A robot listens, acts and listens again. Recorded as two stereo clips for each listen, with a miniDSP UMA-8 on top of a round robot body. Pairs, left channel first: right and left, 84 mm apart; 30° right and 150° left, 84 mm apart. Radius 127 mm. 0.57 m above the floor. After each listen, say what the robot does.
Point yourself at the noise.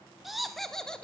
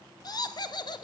Turn 10° right.
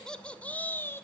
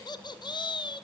Turn 30° right.
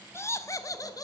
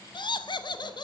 Turn 50° right.
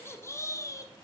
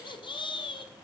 Turn 40° right.
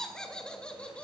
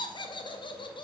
Turn 15° right.
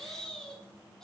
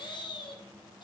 Found it: laughter, straight ahead, 2 to 4 m away.